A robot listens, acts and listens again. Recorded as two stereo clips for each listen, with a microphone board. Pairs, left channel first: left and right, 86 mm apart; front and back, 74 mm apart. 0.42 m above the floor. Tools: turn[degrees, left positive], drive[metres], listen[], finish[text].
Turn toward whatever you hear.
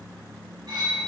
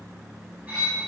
Thought: The cutlery clinking: 115° right.
Action: turn[-115]
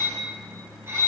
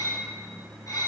Thought: The cutlery clinking is now 35° right.
Action: turn[-35]
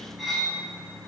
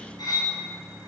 Action: finish[Found it: cutlery clinking, straight ahead.]